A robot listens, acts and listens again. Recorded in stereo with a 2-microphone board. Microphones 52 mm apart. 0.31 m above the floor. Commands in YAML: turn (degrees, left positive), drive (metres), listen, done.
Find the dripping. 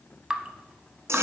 turn: -15
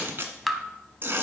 done: "Found it: dripping, straight ahead, under 1 m away."